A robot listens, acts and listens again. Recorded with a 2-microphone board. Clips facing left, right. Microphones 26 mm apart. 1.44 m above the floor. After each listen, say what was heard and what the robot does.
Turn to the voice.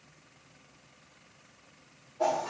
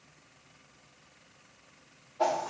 Keep listening.
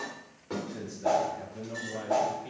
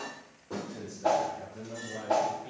Turn 30° left.
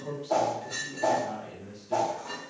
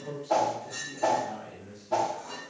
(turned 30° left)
So it is at 135° left. Turn 135° left.
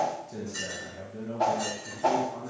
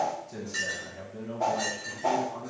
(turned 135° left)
Facing the man speaking, 1 to 2 m away.